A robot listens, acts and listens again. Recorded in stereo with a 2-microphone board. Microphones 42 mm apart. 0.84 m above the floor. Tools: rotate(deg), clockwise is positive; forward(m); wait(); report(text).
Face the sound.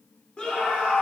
rotate(-25)
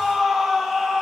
report("Facing the scream, 2 to 4 m away.")